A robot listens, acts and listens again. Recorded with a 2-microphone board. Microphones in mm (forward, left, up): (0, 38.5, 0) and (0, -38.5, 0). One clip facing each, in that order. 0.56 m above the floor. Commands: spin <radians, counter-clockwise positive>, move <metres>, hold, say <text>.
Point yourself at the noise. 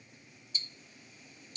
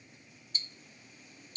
spin -0.70
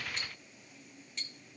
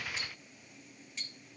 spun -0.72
say Found it: ticking, straight ahead, under 1 m away.